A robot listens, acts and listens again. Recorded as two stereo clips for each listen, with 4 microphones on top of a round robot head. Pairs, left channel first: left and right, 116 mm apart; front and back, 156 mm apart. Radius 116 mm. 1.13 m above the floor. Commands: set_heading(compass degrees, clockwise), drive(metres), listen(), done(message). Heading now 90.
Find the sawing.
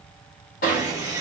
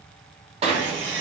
set_heading(260)
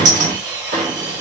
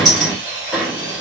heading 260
set_heading(290)
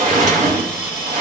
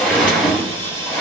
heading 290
set_heading(310)
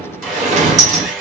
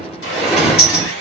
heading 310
done("Facing the sawing.")